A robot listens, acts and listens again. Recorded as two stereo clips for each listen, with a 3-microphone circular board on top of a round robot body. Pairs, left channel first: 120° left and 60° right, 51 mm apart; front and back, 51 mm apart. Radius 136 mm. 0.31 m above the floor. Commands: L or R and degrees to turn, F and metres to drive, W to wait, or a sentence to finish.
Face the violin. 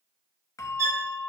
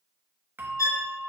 R25
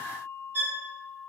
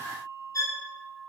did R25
Facing the violin.